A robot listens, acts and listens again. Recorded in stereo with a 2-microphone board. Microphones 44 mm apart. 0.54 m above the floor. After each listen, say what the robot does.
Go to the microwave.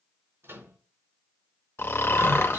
Turn 75° right.
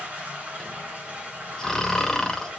Keep listening.
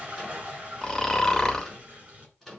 Drive 1.0 m forward.
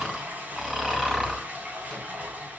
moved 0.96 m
Keep listening.
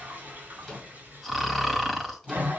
Drive 1.0 m forward.
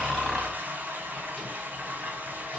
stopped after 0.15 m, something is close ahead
Keep listening.
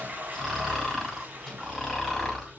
Keep listening.
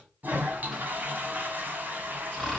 Facing where the microwave came from. I can't hear it now. I did not reach it.